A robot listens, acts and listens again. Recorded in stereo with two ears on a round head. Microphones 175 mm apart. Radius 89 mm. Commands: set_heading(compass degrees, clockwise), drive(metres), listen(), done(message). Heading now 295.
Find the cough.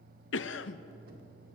set_heading(225)
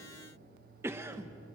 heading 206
set_heading(221)
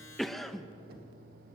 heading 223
done("Found it: a cough, straight ahead.")